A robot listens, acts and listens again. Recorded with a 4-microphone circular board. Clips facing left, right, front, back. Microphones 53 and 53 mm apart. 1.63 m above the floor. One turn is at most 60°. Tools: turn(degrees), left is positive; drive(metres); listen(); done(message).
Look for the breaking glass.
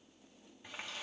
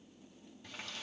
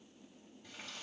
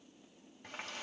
listen()
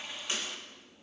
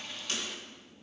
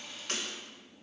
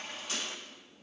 turn(degrees=25)
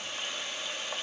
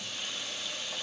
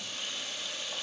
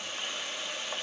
done("I heard breaking glass from this way, but can't make it out now.")